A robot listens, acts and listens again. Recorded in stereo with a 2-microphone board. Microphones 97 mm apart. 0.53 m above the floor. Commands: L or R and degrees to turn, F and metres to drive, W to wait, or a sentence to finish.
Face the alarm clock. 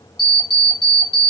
L45
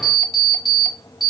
Facing the alarm clock, under 1 m away.